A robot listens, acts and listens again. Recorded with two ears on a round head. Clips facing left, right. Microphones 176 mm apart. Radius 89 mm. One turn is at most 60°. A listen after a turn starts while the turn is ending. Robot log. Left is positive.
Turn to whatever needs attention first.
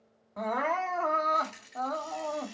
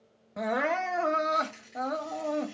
note: The crying: about 30° right or 150° right.
cmd yaw -30
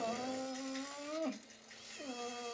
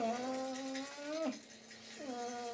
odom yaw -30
end: Facing the crying, under 1 m away.